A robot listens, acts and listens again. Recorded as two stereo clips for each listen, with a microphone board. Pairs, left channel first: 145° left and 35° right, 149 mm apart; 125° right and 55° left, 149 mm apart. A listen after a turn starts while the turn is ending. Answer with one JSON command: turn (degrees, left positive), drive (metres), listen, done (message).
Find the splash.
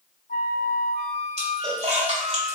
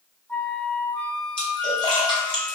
{"turn": -75}
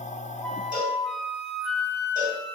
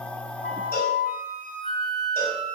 {"done": "Facing where the splash came from. I can't hear it now."}